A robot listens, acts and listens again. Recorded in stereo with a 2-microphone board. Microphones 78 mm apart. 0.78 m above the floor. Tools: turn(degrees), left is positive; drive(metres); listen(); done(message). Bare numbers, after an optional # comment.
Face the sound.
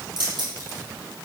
# The keys jangling: about 70° right or 110° right.
turn(-70)
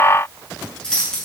# So it is at 10° left.
turn(10)
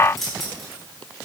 done("Facing the keys jangling.")